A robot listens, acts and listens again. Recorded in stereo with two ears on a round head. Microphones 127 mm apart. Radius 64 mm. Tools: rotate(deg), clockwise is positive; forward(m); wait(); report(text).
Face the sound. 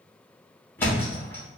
rotate(-15)
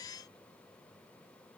wait()
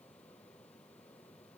report("I heard a thud, but can't make it out now. It was about straight ahead or 150° left.")